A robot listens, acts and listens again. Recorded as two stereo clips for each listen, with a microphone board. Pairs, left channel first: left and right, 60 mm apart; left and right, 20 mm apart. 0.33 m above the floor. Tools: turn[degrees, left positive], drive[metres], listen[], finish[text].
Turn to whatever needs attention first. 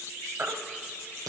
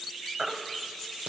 Thought: The baby crying: about 35° right or 145° right.
Action: turn[-35]
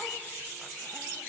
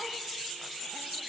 Action: listen[]
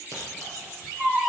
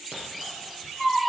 Thought: So it is at 10° right.
Action: turn[-10]
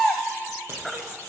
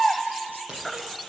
Action: finish[Facing the baby crying.]